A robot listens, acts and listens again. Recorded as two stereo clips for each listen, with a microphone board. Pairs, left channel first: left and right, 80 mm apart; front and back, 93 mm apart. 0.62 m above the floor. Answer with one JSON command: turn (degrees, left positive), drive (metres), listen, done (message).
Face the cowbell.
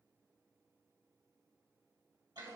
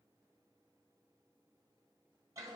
{"listen": true}
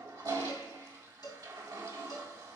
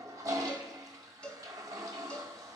{"turn": 75}
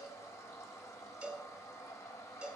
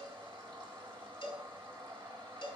{"turn": -15}
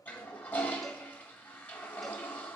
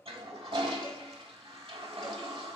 {"listen": true}
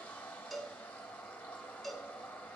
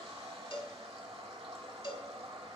{"done": "Facing the cowbell, 1 to 2 m away."}